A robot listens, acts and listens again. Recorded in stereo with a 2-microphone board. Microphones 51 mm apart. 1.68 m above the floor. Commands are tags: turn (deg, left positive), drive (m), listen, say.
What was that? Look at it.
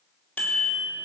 <turn deg="25"/>
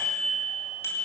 <turn deg="125"/>
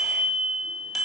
<say>Found it: a bicycle bell, straight ahead.</say>